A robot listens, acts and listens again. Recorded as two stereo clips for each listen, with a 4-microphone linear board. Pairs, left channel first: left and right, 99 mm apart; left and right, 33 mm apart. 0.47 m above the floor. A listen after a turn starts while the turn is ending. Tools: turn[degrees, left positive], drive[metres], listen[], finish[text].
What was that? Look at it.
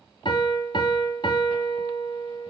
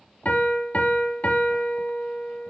Thought: The piano: about 55° left or 125° left.
Action: turn[55]
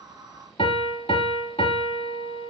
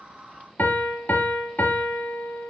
Thought: So it is at 75° left.
Action: turn[75]
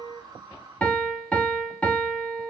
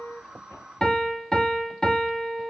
Thought: The piano is now 15° left.
Action: turn[15]
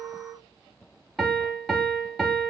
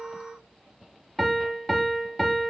Action: finish[Facing the piano, 1 to 2 m away.]